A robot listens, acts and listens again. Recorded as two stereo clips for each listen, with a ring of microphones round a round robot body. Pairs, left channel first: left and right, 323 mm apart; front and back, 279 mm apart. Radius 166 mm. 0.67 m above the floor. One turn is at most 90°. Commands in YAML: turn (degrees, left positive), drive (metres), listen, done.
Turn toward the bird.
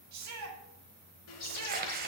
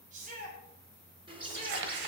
turn: 90
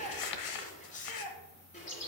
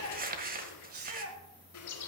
turn: 20
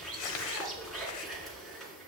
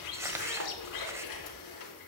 done: "Found it: a bird, straight ahead, 2 to 4 m away."